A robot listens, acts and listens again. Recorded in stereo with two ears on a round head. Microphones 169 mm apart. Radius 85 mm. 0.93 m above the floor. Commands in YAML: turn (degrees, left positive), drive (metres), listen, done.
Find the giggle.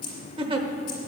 turn: -30
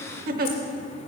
turn: -115
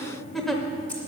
done: "Found it: a giggle, straight ahead, under 1 m away."